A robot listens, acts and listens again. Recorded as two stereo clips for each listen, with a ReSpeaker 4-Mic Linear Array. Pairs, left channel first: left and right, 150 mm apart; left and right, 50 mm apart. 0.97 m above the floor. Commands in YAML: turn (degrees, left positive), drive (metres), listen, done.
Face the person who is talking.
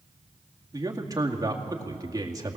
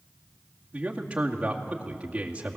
turn: -25
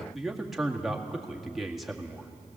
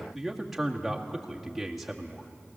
done: "Facing the man speaking, 2 to 4 m away."